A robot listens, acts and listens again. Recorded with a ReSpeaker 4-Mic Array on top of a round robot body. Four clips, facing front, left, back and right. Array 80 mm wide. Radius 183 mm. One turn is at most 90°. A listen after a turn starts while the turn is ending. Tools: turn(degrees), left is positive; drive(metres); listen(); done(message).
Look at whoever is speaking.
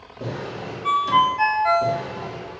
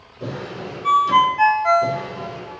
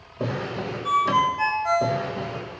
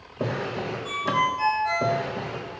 listen()
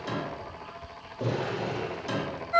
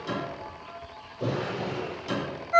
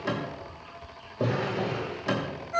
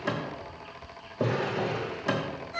listen()
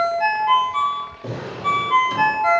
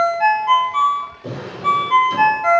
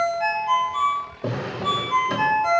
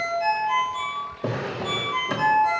done("I can't make out anyone speaking, only a ringtone and a drawer.")